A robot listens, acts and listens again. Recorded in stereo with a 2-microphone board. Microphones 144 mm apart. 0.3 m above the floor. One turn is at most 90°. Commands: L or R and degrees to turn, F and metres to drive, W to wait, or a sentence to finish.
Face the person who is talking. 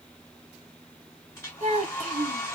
R55
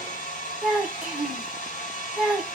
R10
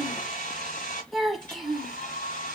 Found it: a child speaking, straight ahead.